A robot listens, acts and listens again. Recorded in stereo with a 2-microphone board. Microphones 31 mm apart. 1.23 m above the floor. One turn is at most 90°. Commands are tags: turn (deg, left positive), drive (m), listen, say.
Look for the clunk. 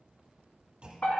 <turn deg="-30"/>
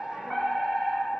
<listen/>
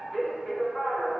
<say>I heard a clunk, but can't make it out now. It was about straight ahead or 120° right.</say>